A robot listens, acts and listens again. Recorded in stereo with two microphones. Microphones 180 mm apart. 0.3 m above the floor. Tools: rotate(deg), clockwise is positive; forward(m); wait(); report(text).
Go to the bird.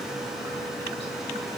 wait()
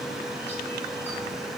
wait()
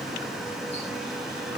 report("I can't make out a bird to turn to.")